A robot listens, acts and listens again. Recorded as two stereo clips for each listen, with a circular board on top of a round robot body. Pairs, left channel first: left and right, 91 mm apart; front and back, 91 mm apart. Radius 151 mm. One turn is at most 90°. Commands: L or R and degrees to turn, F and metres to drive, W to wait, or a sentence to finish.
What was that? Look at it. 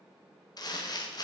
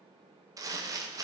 L90
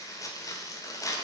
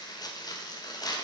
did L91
L40
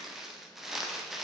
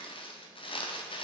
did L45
Found it: crumpling, straight ahead.